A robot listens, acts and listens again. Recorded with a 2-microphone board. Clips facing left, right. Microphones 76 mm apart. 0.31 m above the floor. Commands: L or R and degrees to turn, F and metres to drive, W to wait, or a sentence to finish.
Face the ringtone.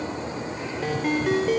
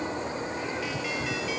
L45
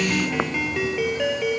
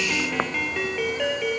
Found it: a ringtone, straight ahead.